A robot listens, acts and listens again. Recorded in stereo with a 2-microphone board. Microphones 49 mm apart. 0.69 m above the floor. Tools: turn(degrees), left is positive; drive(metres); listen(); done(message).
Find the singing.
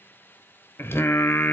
turn(degrees=60)
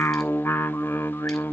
turn(degrees=60)
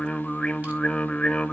turn(degrees=20)
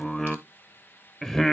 done("Found it: singing, straight ahead, under 1 m away.")